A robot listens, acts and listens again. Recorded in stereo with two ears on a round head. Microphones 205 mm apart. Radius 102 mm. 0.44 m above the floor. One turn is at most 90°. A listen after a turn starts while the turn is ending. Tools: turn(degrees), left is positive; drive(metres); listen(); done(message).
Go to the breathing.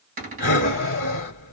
turn(degrees=40)
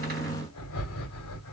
turn(degrees=90)
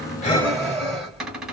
drive(metres=1.0)
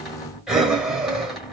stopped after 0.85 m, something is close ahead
done("Arrived at the breathing, straight ahead.")